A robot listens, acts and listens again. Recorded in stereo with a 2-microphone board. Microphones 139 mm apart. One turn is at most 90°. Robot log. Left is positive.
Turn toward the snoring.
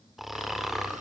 cmd yaw +30
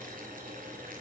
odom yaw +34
cmd idle
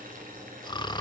note: So it is at 145° left.
cmd yaw +90
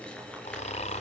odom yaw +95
note: The snoring is now 55° left.
cmd yaw +55
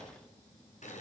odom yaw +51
cmd idle
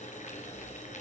cmd idle
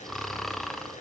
end: Found it: snoring, straight ahead.